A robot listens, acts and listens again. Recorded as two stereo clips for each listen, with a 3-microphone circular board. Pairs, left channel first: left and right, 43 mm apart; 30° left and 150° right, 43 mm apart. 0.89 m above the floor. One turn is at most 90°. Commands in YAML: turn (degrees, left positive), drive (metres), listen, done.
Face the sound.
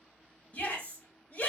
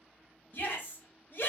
turn: 50
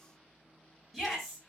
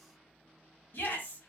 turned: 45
done: "Facing the shout."